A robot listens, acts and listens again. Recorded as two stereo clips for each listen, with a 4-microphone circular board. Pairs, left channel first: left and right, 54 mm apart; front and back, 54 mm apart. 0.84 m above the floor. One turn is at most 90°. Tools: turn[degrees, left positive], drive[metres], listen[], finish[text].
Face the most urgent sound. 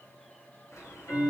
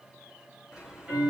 Action: listen[]
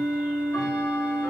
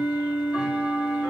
Action: listen[]
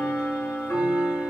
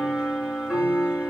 Action: finish[I can't make out anything urgent to turn to.]